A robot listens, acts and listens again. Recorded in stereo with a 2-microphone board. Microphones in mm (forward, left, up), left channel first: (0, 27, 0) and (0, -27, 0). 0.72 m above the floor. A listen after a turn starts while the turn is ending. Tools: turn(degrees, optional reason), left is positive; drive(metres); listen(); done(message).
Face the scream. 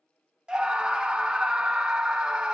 turn(degrees=-15, reason="The scream: about 15° right or 165° right.")
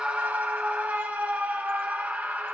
turn(degrees=-150, reason="So it is at 150° right.")
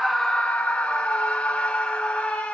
turn(degrees=25, reason="The scream is now 25° left.")
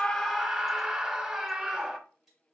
turn(degrees=-15, reason="The scream is now 15° right.")
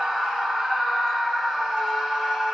done("Facing the scream.")